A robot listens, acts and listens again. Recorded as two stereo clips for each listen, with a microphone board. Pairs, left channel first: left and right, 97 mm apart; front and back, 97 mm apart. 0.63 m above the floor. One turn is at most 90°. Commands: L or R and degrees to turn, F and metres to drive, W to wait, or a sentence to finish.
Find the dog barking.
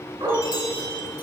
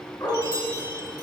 R45
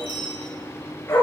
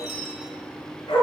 L30
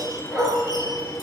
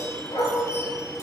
Facing the dog barking.